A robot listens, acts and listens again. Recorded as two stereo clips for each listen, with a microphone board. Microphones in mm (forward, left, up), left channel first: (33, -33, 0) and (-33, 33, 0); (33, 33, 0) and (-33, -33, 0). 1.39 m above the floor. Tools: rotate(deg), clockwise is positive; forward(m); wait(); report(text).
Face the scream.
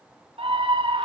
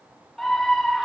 rotate(-130)
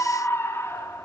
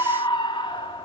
rotate(-20)
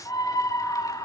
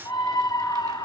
report("Facing the scream.")